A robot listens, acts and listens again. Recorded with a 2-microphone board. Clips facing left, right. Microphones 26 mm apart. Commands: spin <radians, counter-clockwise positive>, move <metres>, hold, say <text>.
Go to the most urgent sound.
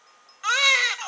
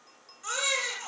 spin 0.96
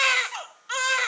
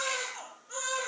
spin 1.13
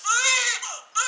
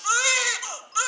move 1.0
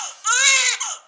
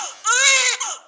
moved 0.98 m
move 1.0
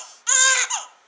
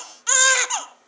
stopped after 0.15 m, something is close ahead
say Arrived at the baby crying, straight ahead.